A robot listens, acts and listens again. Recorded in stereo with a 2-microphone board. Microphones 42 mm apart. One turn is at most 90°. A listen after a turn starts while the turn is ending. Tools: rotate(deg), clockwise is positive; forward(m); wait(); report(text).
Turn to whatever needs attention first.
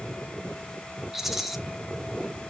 wait()
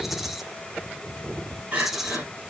rotate(35)
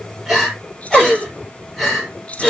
report("Found it: crying, straight ahead, over 4 m away.")